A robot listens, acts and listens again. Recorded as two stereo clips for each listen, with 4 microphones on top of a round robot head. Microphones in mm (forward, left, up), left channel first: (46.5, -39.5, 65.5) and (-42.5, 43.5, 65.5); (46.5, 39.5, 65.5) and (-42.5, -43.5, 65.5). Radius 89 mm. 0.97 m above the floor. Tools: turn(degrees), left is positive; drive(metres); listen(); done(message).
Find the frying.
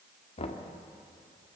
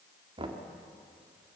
listen()
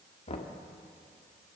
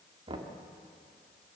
listen()
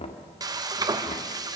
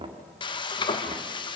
turn(degrees=85)
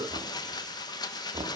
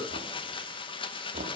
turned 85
done("Found it: frying, straight ahead, 1 to 2 m away.")